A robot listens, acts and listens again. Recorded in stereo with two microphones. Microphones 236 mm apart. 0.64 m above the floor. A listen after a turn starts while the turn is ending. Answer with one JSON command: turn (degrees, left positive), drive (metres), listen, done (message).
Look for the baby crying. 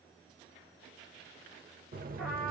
{"listen": true}
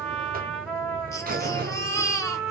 {"turn": 30}
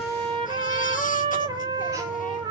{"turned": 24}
{"listen": true}
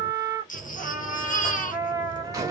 {"turn": 145}
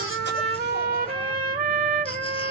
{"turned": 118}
{"turn": 25}
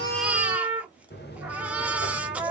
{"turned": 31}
{"done": "Found it: a baby crying, straight ahead, under 1 m away."}